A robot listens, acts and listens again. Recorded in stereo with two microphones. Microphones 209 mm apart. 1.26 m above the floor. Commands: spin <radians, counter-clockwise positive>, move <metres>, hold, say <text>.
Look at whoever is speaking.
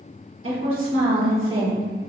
spin -1.31
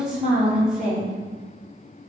say Found it: a woman speaking, straight ahead, 1 to 2 m away.